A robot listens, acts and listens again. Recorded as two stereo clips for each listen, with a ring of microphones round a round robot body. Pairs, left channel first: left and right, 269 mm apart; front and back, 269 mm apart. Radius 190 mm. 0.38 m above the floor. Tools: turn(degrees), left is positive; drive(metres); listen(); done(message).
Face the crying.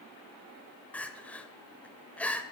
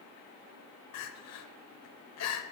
done("Found it: crying, straight ahead.")